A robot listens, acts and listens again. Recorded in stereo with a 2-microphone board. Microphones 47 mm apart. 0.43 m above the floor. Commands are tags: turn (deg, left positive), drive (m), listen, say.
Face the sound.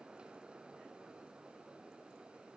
<listen/>
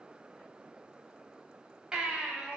<turn deg="-20"/>
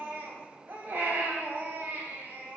<turn deg="-135"/>
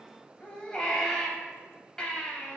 <turn deg="20"/>
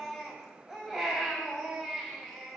<say>Found it: a baby crying, straight ahead, 1 to 2 m away.</say>